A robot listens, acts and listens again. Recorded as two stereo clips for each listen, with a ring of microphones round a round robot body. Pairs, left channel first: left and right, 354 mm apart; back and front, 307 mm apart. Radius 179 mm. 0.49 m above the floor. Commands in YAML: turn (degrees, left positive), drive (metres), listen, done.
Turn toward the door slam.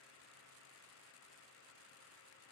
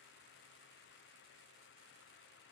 listen: true
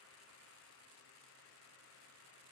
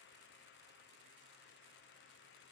listen: true
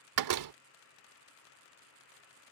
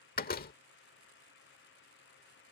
turn: -120
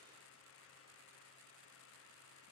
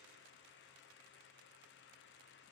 done: "Facing where the door slam came from. I can't hear it now."